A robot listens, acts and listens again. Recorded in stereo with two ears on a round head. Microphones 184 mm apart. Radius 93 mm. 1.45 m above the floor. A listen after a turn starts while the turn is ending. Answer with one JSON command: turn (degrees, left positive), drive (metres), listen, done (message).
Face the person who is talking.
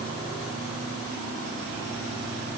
{"listen": true}
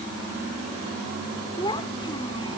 {"turn": 20}
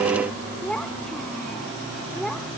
{"done": "Facing the child speaking."}